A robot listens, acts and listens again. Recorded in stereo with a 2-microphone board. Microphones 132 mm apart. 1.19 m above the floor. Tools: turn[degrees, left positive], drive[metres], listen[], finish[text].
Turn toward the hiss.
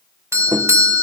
Action: listen[]
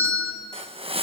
Thought: The hiss: about 45° right or 135° right.
Action: turn[-45]
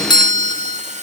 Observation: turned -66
Thought: So it is at 65° right.
Action: turn[-65]
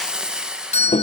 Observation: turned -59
Action: finish[Found it: a hiss, straight ahead, 1 to 2 m away.]